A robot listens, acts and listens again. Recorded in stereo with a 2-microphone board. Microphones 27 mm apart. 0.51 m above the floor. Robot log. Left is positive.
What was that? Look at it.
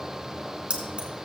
note: The keys jangling: about 50° right or 130° right.
cmd yaw -50
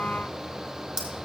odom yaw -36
note: So it is at 20° right.
cmd yaw -20
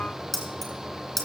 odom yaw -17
end: Facing the keys jangling.